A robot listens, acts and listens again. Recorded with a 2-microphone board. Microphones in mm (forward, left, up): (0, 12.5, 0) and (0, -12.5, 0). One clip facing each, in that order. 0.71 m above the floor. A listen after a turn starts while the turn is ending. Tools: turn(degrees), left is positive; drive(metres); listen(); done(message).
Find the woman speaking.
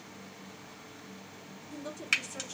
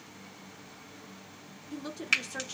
turn(degrees=-45)
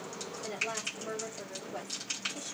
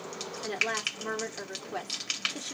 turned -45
turn(degrees=-85)
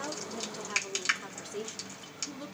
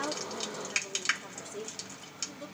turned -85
turn(degrees=40)
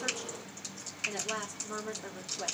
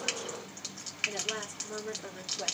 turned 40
done("Facing the woman speaking.")